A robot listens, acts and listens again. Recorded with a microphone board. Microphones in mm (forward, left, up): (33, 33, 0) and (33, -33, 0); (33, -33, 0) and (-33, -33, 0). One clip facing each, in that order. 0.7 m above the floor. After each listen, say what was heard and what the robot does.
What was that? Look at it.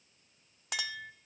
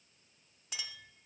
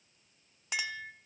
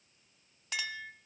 The clink: 75° left. Turn 75° left.
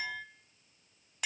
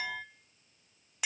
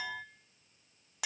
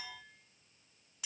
Found it: a clink, straight ahead, under 1 m away.